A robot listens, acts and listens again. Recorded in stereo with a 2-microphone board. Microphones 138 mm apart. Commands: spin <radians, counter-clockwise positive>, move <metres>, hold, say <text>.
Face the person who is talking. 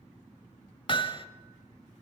hold
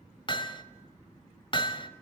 hold
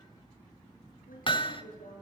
spin 1.57
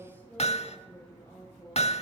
spin 0.26
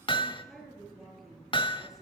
say Facing the woman speaking.